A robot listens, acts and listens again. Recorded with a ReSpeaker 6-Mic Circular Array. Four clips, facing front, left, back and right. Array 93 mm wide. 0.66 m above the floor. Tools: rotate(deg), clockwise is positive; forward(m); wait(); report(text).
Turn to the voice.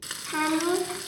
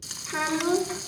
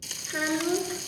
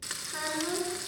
rotate(-30)
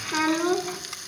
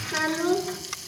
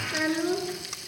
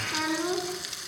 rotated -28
report("Facing the child speaking.")